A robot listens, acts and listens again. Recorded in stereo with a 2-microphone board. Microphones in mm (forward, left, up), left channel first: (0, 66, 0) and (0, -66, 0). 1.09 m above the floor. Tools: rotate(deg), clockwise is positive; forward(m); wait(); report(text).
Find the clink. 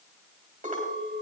rotate(90)
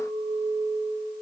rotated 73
rotate(10)
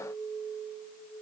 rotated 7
report("Facing the clink.")